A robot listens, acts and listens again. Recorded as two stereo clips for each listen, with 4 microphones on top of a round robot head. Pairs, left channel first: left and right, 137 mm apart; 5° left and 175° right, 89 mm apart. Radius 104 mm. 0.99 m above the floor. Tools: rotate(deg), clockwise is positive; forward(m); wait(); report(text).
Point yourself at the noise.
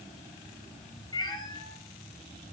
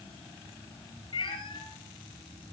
rotate(-30)
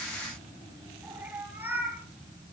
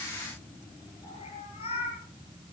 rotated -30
rotate(15)
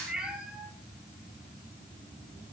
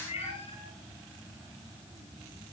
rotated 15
report("Facing the cat meowing.")